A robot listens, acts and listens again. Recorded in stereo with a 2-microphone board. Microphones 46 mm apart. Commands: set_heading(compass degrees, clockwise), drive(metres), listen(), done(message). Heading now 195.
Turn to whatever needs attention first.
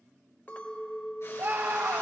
set_heading(255)
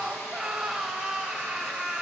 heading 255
set_heading(270)
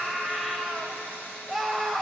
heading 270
done("Found it: a scream, straight ahead, 1 to 2 m away.")